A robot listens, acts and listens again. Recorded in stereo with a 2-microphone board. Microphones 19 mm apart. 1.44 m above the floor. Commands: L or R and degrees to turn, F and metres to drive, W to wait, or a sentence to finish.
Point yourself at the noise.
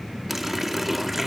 R30
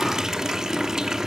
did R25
R140
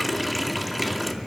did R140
Found it: a running tap, straight ahead.